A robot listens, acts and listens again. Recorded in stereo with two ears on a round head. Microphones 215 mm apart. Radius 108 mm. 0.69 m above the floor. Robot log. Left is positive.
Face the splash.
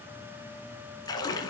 note: The splash: about 15° left or 165° left.
cmd yaw +15
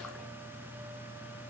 cmd idle
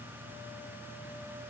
end: I heard a splash, but can't make it out now. It was about straight ahead or 150° left.